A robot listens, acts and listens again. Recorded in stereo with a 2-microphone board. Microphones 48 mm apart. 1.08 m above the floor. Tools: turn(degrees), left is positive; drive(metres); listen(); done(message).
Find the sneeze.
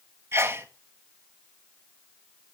turn(degrees=-55)
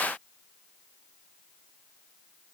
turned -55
listen()
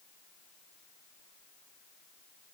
done("I heard a sneeze, but can't make it out now. It was about straight ahead or 70° right.")